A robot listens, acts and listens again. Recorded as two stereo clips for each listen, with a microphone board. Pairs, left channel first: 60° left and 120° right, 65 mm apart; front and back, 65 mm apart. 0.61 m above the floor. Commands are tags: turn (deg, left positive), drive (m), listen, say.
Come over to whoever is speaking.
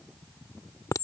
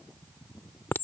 <listen/>
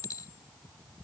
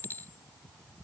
<listen/>
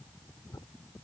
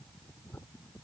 <say>I can't make out anyone speaking to turn to.</say>